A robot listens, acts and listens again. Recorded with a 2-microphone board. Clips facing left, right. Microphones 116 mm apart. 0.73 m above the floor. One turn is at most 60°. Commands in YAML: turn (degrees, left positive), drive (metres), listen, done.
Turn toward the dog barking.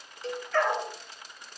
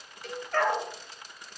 turn: -50
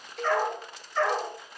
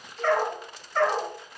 turn: -60
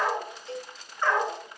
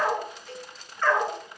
turn: 15
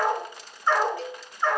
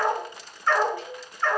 turn: 15
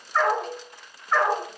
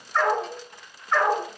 done: "Found it: a dog barking, straight ahead, 1 to 2 m away."